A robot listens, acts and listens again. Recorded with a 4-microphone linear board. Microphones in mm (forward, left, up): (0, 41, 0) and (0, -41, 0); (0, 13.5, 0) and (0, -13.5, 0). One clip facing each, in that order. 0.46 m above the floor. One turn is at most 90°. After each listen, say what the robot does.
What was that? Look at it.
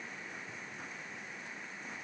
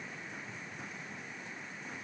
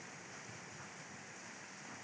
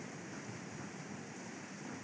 Keep listening.
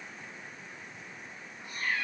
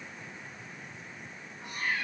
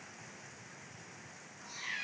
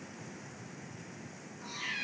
Turn 90° right.
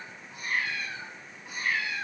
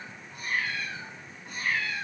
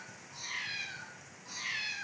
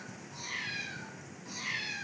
Found it: a cat meowing, straight ahead, 1 to 2 m away.